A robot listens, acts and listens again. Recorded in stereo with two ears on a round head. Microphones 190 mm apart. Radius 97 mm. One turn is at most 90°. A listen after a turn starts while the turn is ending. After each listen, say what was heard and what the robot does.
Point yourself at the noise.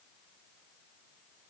Keep listening.
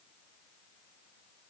Keep listening.
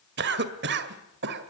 The cough: about 55° right or 125° right. Turn 55° right.
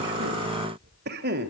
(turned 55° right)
So it is at 55° right. Turn 55° right.
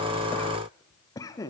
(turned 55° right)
The cough is now 20° left. Turn 20° left.
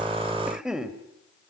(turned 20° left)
Facing the cough.